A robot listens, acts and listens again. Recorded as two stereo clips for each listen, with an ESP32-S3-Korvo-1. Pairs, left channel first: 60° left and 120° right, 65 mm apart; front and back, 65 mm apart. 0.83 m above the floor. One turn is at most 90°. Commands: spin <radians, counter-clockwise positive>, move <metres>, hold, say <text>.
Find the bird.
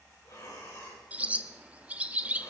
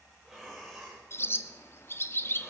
spin -0.87
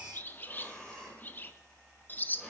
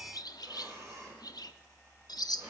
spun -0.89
say Found it: a bird, straight ahead.